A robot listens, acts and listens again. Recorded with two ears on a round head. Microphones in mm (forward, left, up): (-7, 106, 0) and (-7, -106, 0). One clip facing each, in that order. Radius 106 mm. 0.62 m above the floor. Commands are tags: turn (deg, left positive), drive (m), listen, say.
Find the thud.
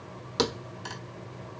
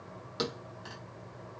<turn deg="65"/>
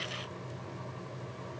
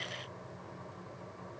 <listen/>
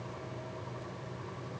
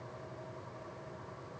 <say>I heard a thud, but can't make it out now. It was about straight ahead or 50° left.</say>